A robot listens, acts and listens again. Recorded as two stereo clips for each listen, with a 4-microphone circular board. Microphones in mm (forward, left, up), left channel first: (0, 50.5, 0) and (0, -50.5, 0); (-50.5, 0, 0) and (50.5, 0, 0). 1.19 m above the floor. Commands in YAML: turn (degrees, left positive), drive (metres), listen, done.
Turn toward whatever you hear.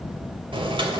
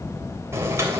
turn: -60
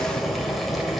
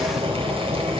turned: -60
done: "Found it: boiling, straight ahead, 2 to 4 m away."